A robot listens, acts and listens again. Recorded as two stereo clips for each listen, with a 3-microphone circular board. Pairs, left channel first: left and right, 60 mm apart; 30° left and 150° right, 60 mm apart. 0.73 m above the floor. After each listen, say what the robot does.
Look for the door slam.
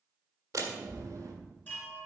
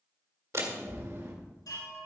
Turn 115° right.
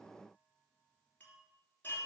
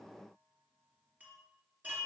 Facing where the door slam came from. I can't hear it now.